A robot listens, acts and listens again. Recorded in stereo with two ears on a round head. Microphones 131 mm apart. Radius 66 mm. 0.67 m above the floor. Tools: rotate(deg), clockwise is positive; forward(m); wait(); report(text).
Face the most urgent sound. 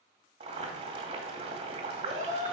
rotate(50)
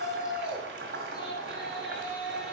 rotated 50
report("Found it: a shout, straight ahead, 2 to 4 m away.")